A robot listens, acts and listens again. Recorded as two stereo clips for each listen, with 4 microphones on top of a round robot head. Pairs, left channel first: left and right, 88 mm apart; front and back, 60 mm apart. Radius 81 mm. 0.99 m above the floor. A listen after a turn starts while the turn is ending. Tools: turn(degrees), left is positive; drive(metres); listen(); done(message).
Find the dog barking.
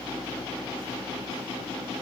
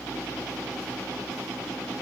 listen()
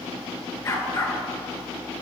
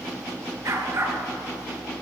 turn(degrees=145)
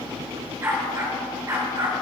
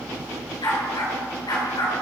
turn(degrees=-30)
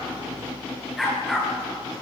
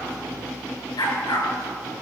done("Facing the dog barking.")